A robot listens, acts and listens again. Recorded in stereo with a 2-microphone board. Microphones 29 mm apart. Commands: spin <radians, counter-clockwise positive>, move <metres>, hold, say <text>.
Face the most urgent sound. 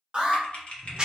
spin -0.52
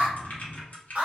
spin -2.09
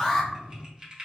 spin 0.35
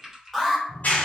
say Found it: an alarm, straight ahead, under 1 m away.